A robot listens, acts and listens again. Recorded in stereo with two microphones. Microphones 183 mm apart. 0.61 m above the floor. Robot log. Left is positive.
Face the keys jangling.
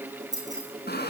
note: The keys jangling: about 20° right or 160° right.
cmd yaw -20
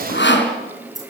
note: So it is at 135° right.
cmd yaw -135
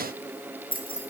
note: The keys jangling is now 30° left.
cmd yaw +30
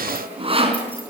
cmd idle
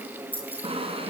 note: The keys jangling is now 10° left.
cmd yaw +10
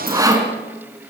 cmd idle
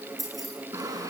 end: Facing the keys jangling, over 4 m away.